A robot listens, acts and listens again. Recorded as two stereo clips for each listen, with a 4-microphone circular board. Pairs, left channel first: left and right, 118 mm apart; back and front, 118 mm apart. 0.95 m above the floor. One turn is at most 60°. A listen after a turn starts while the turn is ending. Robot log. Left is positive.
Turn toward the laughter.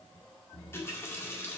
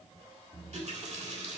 cmd idle
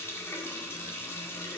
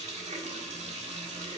cmd idle
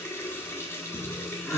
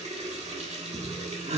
end: Found it: laughter, straight ahead.